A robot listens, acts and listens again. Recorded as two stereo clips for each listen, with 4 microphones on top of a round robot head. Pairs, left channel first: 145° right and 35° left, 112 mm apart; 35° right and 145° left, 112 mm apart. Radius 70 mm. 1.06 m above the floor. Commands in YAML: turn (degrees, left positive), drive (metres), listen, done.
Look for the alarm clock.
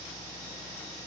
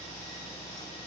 listen: true
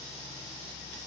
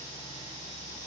listen: true
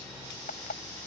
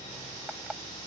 turn: -135
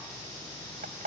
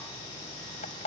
done: "Found it: an alarm clock, straight ahead."